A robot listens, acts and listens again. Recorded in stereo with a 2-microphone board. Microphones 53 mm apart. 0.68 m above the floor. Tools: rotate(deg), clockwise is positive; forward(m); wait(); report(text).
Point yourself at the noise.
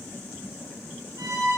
rotate(90)
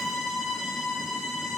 report("Found it: a violin, straight ahead.")